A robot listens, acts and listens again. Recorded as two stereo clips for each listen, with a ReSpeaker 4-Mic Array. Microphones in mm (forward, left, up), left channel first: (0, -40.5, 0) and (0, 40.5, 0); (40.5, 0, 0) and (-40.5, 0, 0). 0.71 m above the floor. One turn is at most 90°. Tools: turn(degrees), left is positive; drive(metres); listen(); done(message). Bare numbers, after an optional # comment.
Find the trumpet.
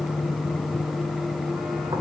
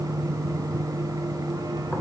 listen()
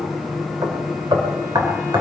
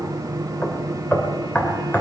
listen()
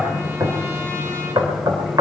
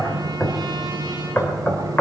done("I can't make out a trumpet, only knocking.")